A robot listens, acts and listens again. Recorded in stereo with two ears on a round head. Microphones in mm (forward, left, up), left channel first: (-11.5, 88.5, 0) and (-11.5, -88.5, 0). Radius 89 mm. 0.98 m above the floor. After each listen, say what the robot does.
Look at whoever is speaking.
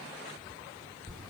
Keep listening.
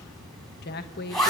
Turn 55° left.
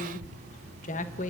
Turn 50° left.
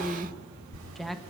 Found it: a woman speaking, straight ahead.